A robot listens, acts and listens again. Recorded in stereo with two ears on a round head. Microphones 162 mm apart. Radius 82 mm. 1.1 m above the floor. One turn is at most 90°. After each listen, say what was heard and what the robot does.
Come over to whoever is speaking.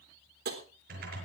Keep listening.
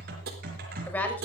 Turn 30° left.
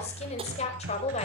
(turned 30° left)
So it is at 140° left. Turn 90° left.
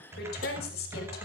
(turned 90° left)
The woman speaking is now 55° left. Turn 55° left.
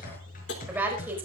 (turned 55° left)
The woman speaking is now 10° right. Turn 10° right.
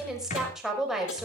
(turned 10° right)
Drive 1.0 m forward.
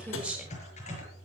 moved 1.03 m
Drive 1.0 m forward.
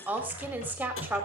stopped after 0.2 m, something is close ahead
The woman speaking is now 10° right. Turn 10° right.
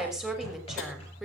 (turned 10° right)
Something is in my way. I am facing the woman speaking but have not reached it.